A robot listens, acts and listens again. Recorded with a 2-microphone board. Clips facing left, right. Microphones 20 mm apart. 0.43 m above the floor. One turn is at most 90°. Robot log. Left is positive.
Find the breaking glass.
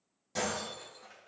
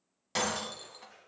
note: The breaking glass: about 70° right or 110° right.
cmd yaw -70
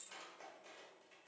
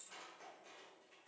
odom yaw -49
cmd idle
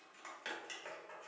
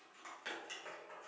end: I heard breaking glass, but can't make it out now. It was about 25° right or 60° right.